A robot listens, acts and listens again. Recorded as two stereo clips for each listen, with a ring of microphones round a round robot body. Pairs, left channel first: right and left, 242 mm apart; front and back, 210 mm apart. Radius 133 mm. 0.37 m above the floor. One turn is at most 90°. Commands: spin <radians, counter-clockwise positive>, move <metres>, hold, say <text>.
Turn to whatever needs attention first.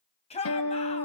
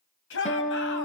spin -0.44
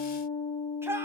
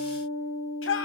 spin 0.17
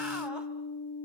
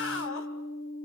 hold
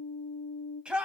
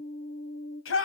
say Found it: a shout, straight ahead, 2 to 4 m away.